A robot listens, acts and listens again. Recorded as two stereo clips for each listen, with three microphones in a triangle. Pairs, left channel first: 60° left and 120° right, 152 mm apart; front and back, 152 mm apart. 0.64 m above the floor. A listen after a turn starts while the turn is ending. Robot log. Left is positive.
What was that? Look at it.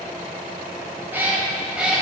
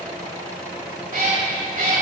note: The cat meowing: 155° left.
cmd yaw +155
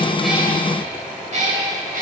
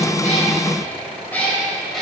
note: The cat meowing is now 90° right.
cmd yaw -90
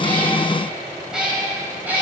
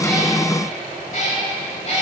note: The cat meowing is now 45° right.
cmd yaw -45
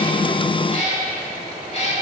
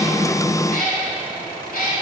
note: The cat meowing is now 15° left.
cmd yaw +15
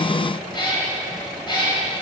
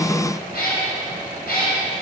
end: Found it: a cat meowing, straight ahead, 2 to 4 m away.